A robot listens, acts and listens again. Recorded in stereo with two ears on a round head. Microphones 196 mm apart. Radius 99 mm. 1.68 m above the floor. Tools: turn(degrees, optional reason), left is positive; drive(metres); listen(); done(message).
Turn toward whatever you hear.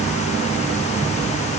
listen()
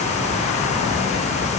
listen()
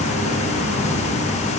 done("I can't make out anything to turn to.")